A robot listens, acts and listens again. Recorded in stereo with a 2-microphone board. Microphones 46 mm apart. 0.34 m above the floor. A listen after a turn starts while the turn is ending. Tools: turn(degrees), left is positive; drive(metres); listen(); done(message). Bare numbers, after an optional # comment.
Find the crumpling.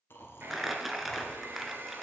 turn(30)
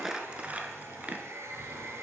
# So it is at 30° right.
turn(-30)
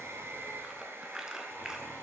# The crumpling is now 10° right.
turn(-10)
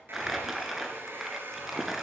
done("Found it: crumpling, straight ahead.")